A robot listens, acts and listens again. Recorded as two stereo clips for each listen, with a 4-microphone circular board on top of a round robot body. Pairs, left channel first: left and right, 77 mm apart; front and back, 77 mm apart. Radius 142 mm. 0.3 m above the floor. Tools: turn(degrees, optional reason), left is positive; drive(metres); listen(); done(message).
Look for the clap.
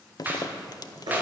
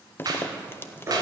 turn(degrees=-155, reason="The clap: 155° right.")
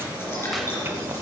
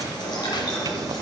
listen()
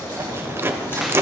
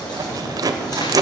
listen()
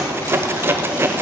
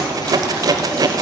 done("I heard a clap from this way, but can't make it out now.")